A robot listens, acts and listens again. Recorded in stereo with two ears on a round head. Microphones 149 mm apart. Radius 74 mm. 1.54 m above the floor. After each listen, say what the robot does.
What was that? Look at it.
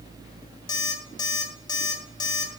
Turn 25° left.
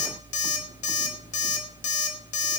Turn 125° left.
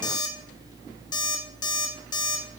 Turn 30° left.
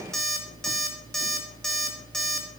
Facing the alarm clock.